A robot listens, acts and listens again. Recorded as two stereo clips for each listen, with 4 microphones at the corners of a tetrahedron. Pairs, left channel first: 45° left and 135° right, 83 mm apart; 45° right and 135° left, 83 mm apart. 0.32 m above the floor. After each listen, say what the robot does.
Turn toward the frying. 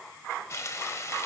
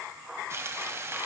Turn 90° left.
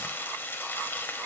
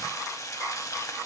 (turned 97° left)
Turn 10° right.
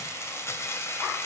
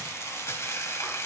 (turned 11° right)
Facing the frying, under 1 m away.